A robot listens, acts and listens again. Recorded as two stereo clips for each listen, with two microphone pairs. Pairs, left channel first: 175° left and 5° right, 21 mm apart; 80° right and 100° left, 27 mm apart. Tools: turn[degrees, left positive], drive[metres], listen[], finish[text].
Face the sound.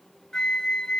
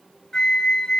Thought: The flute: 135° right.
Action: turn[-135]
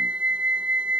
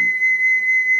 Action: finish[Found it: a flute, straight ahead, 1 to 2 m away.]